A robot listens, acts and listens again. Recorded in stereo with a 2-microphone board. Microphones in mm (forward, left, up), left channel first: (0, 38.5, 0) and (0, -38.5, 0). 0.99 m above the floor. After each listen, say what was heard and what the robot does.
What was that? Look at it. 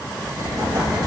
The explosion: about 55° right or 125° right. Turn 55° right.
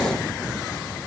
Keep listening.
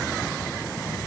I heard an explosion, but can't make it out now. It was about straight ahead or 70° right.